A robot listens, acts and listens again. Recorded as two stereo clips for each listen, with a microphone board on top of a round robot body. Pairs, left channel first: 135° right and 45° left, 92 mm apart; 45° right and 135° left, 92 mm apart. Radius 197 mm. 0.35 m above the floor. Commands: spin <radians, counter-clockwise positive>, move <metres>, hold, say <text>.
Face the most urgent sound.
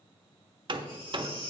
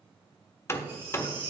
spin -2.79
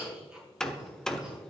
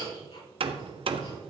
hold
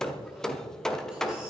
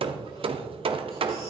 hold
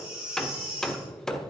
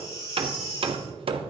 spin -0.61
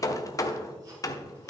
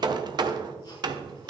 hold
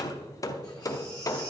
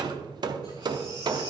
hold
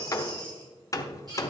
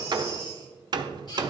say Found it: a baby crying, straight ahead, over 4 m away.